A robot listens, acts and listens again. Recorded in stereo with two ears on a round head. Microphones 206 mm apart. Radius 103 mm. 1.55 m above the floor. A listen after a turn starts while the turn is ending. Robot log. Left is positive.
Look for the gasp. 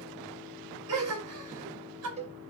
note: The gasp: about 75° right or 105° right.
cmd yaw -75
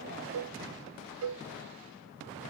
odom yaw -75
cmd idle
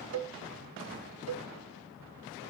end: I heard a gasp, but can't make it out now. It was about straight ahead or 30° right.